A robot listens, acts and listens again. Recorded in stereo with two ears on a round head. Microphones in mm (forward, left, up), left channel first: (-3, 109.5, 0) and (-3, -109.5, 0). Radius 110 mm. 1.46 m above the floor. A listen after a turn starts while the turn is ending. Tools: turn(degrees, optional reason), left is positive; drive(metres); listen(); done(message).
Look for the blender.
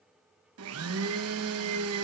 turn(degrees=-65, reason="The blender: about 65° right or 115° right.")
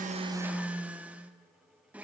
done("Facing the blender, 1 to 2 m away.")